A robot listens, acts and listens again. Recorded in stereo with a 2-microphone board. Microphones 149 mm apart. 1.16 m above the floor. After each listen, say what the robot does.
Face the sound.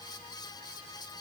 Keep listening.
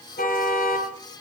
Turn 90° left.
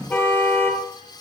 Turn 10° left.
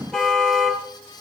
Found it: a car horn, straight ahead, 2 to 4 m away.